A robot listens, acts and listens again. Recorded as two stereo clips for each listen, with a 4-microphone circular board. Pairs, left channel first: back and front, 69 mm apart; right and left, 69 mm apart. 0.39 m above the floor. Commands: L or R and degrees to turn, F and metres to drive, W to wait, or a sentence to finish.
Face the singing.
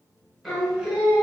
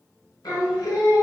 R75
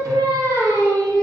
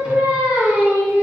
L30
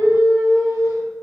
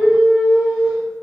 L25
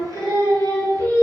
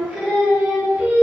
L25
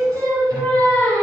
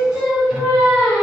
L15
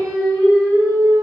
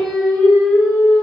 Facing the singing, 1 to 2 m away.